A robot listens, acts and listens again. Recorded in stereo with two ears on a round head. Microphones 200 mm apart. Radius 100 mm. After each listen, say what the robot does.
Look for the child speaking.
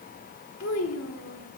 Turn 70° left.
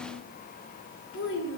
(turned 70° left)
Turn 60° left.
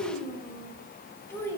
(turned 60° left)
Turn 10° left.
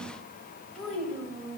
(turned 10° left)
Facing the child speaking, 2 to 4 m away.